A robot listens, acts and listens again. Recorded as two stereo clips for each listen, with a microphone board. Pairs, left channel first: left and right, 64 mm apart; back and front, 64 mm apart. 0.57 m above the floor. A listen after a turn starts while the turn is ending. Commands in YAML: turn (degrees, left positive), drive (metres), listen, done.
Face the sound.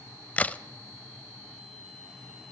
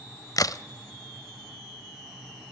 turn: 160
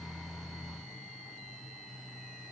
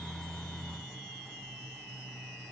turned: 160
done: "I heard a crack from this way, but can't make it out now."